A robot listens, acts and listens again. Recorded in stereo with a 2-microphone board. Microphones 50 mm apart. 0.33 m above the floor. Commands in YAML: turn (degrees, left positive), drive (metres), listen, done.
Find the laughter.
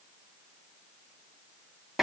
listen: true
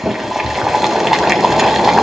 listen: true
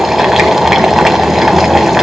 done: "I can't make out laughter to turn to."